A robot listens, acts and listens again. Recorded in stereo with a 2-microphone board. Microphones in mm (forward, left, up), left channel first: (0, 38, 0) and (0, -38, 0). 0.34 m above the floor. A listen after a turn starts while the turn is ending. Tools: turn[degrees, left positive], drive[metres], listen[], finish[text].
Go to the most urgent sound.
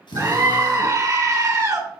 Thought: The scream: about 45° right or 135° right.
Action: turn[-45]
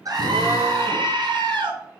Thought: So it is at 85° right.
Action: turn[-85]
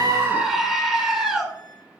Action: drive[1.0]
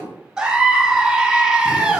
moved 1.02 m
Thought: The scream is now 10° right.
Action: turn[-10]
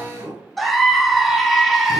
Action: drive[1.0]
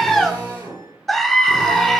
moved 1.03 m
Action: drive[1.0]
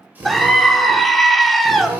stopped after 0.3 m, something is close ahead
Action: finish[Arrived at the scream, straight ahead.]